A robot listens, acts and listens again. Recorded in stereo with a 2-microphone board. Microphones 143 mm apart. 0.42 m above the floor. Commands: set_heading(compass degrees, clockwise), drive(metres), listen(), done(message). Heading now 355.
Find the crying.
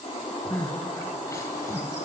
set_heading(335)
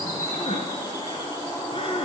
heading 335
set_heading(200)
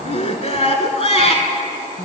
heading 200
set_heading(155)
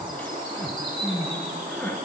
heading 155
set_heading(140)
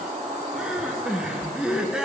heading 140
done("Facing the crying.")